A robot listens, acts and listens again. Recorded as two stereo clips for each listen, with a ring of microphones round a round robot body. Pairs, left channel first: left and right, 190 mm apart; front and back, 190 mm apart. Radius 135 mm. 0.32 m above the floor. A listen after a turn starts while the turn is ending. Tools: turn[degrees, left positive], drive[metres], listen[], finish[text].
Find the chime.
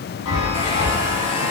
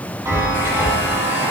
Thought: The chime: 105° left.
Action: turn[105]
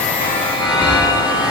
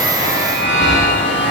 Thought: The chime is now 25° left.
Action: turn[25]
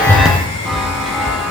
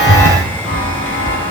Action: finish[Found it: a chime, straight ahead.]